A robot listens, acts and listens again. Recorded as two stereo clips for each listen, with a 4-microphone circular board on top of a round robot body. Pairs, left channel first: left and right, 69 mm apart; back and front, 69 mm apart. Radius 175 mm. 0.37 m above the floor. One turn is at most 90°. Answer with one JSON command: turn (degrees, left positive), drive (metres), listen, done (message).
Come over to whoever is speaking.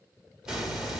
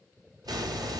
{"listen": true}
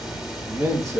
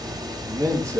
{"turn": -45}
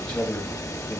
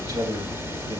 {"turn": 20}
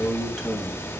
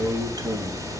{"drive": 1.0}
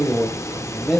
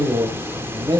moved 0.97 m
{"drive": 1.0}
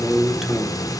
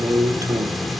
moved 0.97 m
{"drive": 1.0}
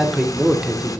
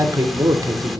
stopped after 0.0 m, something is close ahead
{"done": "Arrived at the man speaking, straight ahead."}